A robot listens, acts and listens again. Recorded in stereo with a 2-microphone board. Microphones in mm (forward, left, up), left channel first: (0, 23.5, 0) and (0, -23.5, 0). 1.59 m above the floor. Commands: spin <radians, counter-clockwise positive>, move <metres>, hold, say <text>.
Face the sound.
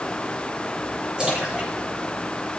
spin -0.35
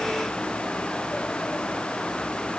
hold
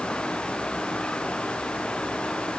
say I heard a splash, but can't make it out now. It was about straight ahead or 140° right.